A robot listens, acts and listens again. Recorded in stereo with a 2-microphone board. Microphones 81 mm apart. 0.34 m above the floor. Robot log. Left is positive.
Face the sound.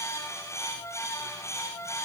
cmd idle
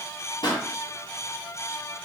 note: The pop: about 70° left or 110° left.
cmd yaw +70
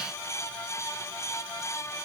cmd idle
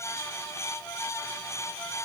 end: I heard a pop, but can't make it out now. It was about straight ahead or 40° left.